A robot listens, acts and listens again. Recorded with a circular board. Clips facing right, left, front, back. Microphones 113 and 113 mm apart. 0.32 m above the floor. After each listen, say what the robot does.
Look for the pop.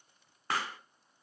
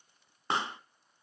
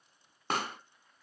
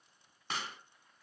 Turn 25° left.
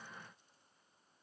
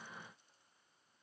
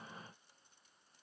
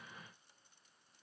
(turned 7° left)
Turn 20° left.
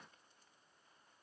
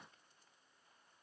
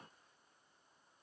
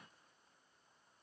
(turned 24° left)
I heard a pop from this way, but can't make it out now.